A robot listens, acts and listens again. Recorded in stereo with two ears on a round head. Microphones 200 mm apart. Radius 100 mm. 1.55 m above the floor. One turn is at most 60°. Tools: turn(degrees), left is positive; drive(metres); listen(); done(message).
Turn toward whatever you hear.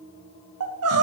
turn(degrees=-60)
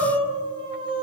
turn(degrees=-25)
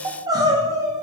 turn(degrees=-15)
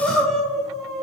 done("Found it: crying, straight ahead, under 1 m away.")